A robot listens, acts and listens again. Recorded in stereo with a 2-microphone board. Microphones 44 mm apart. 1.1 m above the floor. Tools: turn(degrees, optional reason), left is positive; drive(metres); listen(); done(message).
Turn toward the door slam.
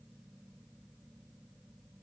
listen()
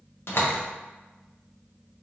turn(degrees=65, reason="The door slam: about 65° left or 115° left.")
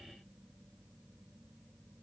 listen()
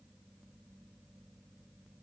done("I heard a door slam, but can't make it out now. It was about straight ahead or 50° left.")